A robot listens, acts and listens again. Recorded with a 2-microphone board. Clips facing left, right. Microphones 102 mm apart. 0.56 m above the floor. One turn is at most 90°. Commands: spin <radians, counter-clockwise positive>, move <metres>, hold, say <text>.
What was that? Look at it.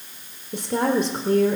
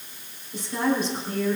spin 1.13
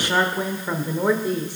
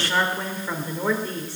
spin 0.35
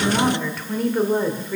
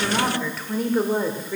say Facing the woman speaking, 1 to 2 m away.